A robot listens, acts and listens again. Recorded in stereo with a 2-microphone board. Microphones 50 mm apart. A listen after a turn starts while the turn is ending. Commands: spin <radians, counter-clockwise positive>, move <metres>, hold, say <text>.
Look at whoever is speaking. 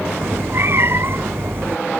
hold
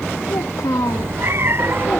spin 1.57
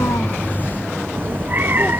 hold
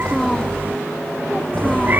hold
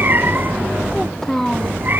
spin 0.17
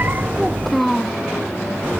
say Found it: a child speaking, straight ahead.